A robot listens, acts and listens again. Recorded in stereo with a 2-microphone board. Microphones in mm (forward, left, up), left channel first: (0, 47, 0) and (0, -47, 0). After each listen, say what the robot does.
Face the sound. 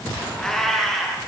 Turn 30° left.
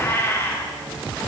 Turn 155° left.
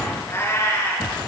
Turn 35° left.
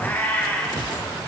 Turn 25° left.
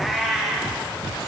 Found it: a cat meowing, straight ahead, over 4 m away.